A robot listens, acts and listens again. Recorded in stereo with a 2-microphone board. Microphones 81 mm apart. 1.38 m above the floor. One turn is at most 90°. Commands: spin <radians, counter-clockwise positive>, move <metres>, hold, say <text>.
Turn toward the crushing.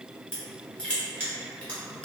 spin 0.52
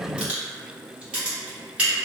spin -0.26
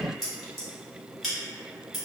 say Facing the crushing.